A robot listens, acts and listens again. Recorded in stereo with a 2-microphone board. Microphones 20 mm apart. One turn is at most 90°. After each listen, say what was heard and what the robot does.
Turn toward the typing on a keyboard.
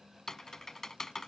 The typing on a keyboard: about 25° left or 155° left. Turn 25° left.
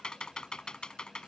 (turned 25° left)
So it is at 125° left. Turn 90° left.
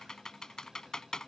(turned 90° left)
The typing on a keyboard is now 40° left. Turn 40° left.
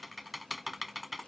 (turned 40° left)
Found it: typing on a keyboard, straight ahead.